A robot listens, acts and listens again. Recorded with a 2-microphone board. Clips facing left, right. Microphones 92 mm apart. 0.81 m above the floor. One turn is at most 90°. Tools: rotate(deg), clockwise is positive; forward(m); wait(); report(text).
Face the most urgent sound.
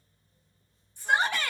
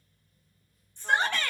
rotate(-30)
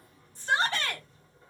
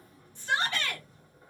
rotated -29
rotate(-90)
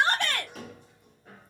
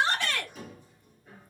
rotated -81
rotate(-60)
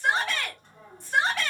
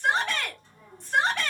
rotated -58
report("Found it: a shout, straight ahead.")